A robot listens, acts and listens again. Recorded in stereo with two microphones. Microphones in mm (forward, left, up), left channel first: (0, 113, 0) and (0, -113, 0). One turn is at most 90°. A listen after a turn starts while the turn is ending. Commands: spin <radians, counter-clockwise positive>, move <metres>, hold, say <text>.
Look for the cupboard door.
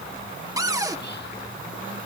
spin -0.26
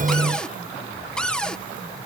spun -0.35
say Found it: a cupboard door, straight ahead.